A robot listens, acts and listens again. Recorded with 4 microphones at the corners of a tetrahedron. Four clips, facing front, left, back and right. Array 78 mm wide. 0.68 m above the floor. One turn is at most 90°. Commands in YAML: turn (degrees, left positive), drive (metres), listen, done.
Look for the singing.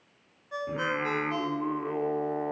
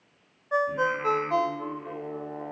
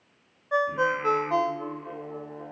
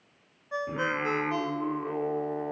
turn: -25
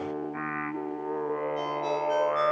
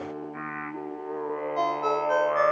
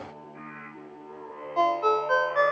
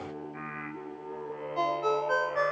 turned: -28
turn: 55
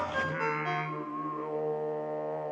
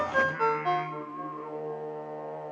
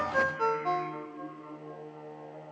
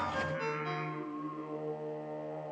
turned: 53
turn: 20
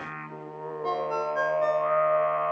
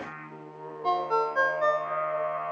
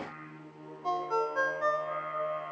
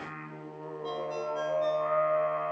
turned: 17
done: "Found it: singing, straight ahead, 2 to 4 m away."